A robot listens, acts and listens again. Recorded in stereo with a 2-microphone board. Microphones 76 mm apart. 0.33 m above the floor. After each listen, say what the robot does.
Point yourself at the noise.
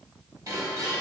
Turn 45° right.
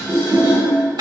Turn 85° right.
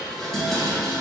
Facing the dishes clattering, 1 to 2 m away.